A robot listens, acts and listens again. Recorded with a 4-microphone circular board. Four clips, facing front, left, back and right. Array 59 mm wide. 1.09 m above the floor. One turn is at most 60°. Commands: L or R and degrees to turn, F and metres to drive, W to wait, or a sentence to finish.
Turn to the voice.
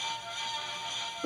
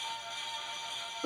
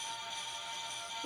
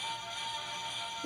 W
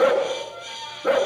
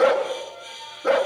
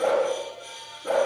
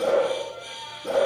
W
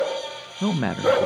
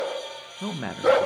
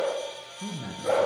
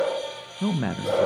Found it: a man speaking, straight ahead.